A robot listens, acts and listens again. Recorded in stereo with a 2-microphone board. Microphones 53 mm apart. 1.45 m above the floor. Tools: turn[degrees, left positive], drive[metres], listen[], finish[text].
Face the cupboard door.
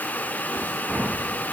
Action: listen[]
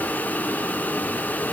Action: listen[]
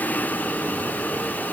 Action: finish[I can't make out a cupboard door.]